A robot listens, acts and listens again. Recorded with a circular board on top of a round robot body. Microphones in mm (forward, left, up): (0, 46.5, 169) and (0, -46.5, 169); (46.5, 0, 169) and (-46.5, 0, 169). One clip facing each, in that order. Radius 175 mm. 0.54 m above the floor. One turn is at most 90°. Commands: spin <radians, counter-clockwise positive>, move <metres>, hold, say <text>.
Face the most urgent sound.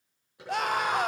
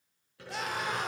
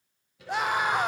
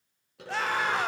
spin 1.31
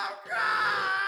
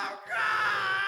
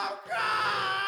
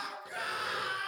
spin 0.26
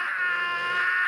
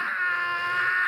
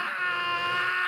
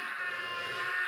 say Facing the scream.